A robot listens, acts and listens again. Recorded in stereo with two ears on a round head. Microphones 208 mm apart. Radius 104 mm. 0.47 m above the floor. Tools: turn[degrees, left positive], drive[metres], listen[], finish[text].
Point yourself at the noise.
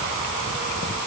Action: listen[]
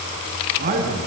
Thought: The man speaking: about 40° right or 140° right.
Action: turn[-40]
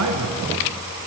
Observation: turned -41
Thought: So it is at 105° right.
Action: turn[-105]
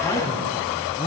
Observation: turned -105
Action: listen[]
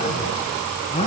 Thought: The man speaking is now 25° left.
Action: turn[25]
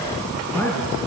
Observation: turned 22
Action: finish[Facing the man speaking, over 4 m away.]